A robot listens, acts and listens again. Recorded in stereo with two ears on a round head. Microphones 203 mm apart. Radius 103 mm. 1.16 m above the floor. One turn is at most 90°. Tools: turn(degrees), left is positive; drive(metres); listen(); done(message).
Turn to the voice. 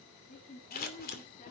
turn(degrees=35)
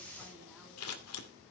listen()
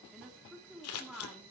done("Found it: a woman speaking, straight ahead.")